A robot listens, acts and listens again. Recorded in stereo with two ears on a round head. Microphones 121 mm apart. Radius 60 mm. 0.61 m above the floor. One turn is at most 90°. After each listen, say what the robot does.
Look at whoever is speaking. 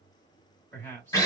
Turn 30° left.
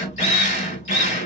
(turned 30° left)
Keep listening.
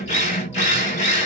Keep listening.
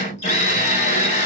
I heard a man speaking, but can't make it out now. It was about 15° right or 135° left.